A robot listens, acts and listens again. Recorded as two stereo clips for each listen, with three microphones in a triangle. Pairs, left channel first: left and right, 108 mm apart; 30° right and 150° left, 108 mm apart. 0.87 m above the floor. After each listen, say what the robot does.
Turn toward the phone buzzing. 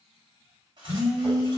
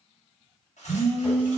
Facing the phone buzzing.